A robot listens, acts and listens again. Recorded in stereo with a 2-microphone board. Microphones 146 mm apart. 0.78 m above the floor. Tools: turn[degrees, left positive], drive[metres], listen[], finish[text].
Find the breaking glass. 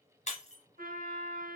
Thought: The breaking glass: about 45° left or 135° left.
Action: turn[45]
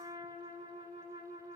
Action: listen[]
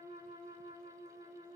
Action: finish[I heard breaking glass, but can't make it out now. It was about straight ahead or 90° left.]